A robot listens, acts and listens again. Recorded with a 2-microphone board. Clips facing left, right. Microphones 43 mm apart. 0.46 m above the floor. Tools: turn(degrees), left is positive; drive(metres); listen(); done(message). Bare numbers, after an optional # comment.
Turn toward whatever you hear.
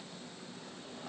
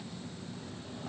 listen()
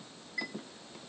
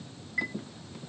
# The chime: about 25° right or 155° right.
turn(-25)
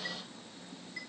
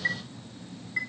# So it is at 125° right.
turn(-125)
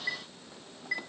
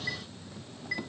# The chime is now 10° left.
turn(10)
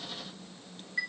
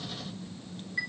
done("Found it: a chime, straight ahead.")